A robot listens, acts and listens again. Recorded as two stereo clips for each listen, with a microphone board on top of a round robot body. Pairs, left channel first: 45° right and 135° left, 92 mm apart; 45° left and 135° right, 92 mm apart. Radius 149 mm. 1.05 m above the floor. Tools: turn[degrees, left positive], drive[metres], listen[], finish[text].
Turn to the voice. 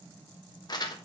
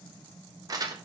Action: listen[]
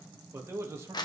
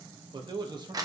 Thought: The man speaking: 165° right.
Action: turn[-165]
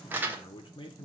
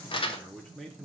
Thought: The man speaking is now 45° right.
Action: turn[-45]
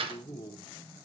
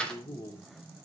Action: finish[Found it: a man speaking, straight ahead, 1 to 2 m away.]